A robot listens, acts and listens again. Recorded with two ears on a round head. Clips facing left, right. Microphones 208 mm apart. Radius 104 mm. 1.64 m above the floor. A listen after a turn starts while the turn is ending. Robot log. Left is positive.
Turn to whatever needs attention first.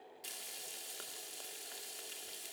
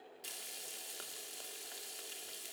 cmd idle
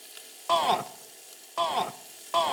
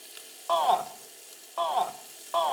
note: The shout: about 35° left or 145° left.
cmd yaw +35
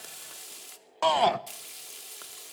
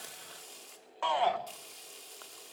note: So it is at 105° left.
cmd yaw +105
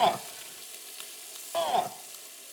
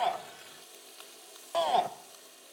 end: Found it: a shout, straight ahead, 1 to 2 m away.